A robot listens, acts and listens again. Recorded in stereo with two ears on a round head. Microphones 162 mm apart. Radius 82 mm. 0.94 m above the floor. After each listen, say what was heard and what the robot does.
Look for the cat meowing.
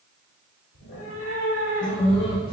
The cat meowing: about 70° left or 110° left. Turn 70° left.
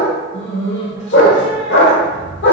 So it is at 70° right. Turn 70° right.
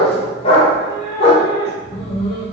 The cat meowing is now 15° right. Turn 15° right.
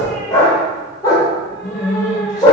Found it: a cat meowing, straight ahead, 1 to 2 m away.